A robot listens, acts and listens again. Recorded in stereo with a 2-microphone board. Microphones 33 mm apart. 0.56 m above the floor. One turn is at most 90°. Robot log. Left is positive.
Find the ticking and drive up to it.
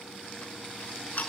note: The ticking: about 50° left or 130° left.
cmd yaw +50
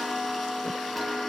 cmd fwd 1.0
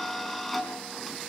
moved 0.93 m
cmd fwd 1.0
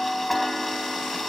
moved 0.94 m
cmd fwd 1.0
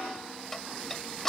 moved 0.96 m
note: The ticking is now 10° left.
cmd yaw +10
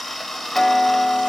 cmd fwd 1.0
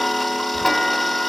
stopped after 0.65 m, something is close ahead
end: I am next to the ticking.